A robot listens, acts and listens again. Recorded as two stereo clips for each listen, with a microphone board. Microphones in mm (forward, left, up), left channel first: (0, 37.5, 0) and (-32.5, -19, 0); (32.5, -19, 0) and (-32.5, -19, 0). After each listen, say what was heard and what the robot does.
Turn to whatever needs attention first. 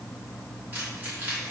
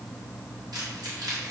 Keep listening.
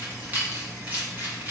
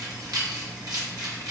Keep listening.
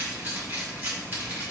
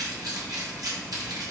I can't make out anything urgent, only keys jangling.